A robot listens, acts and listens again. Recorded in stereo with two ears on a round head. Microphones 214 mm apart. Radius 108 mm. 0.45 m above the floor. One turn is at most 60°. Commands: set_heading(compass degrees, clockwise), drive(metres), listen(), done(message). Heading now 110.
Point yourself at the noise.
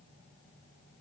listen()
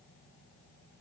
listen()
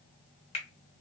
set_heading(80)
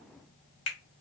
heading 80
set_heading(20)
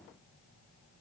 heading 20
set_heading(325)
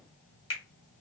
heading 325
set_heading(300)
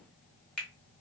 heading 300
done("Facing the finger snap.")